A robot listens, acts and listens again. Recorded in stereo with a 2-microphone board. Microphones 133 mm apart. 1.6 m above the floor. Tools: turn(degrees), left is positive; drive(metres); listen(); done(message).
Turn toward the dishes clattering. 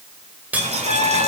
turn(degrees=-30)
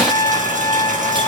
listen()
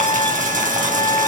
listen()
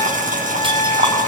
done("I heard dishes clattering, but can't make it out now. It was about 20° left or 140° right.")